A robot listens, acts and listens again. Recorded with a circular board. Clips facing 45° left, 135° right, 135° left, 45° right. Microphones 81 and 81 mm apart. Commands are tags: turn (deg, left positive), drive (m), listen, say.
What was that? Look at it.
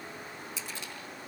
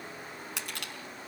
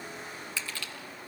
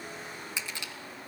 <turn deg="-115"/>
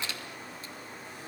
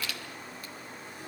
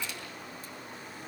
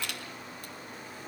<turn deg="-20"/>
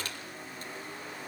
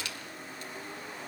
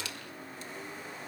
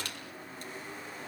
<say>Facing the crushing.</say>